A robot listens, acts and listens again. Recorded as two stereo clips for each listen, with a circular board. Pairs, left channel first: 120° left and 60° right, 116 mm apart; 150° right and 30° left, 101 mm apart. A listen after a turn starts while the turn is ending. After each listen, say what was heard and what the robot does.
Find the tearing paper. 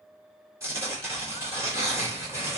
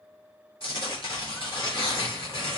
The tearing paper: 125° right. Turn 125° right.
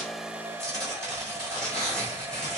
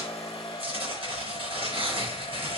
The tearing paper is now 35° left. Turn 35° left.
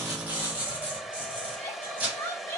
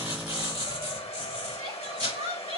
The tearing paper is now 15° left. Turn 15° left.
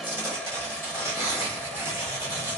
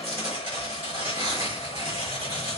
Found it: tearing paper, straight ahead, 2 to 4 m away.